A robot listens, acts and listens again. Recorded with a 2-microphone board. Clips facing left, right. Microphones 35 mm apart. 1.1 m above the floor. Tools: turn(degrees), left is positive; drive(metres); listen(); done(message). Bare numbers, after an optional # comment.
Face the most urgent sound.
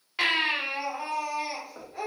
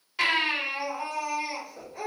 # The baby crying: about 20° left or 160° left.
turn(20)
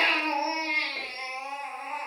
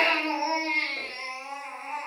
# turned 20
# So it is at 140° left.
turn(140)
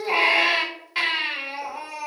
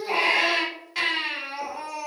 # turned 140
# The baby crying is now 15° left.
turn(15)
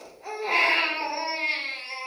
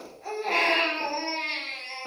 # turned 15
done("Facing the baby crying, 1 to 2 m away.")